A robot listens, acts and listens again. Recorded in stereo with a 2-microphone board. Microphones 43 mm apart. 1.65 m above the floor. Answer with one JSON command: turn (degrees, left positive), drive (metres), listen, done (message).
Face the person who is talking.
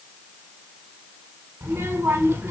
{"turn": -70}
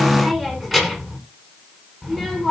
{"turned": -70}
{"done": "Facing the child speaking."}